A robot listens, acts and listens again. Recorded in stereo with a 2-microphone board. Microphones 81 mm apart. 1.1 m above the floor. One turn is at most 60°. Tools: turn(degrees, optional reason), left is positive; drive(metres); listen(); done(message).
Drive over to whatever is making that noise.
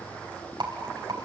turn(degrees=-60, reason="The rattle: about 65° right or 115° right.")
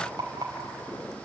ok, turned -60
turn(degrees=-55, reason="So it is at 55° right.")
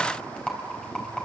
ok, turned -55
turn(degrees=10, reason="The rattle is now 10° left.")
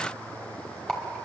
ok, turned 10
drive(metres=1.0)
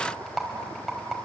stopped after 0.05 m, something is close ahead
done("Blocked. The rattle is further on, straight ahead.")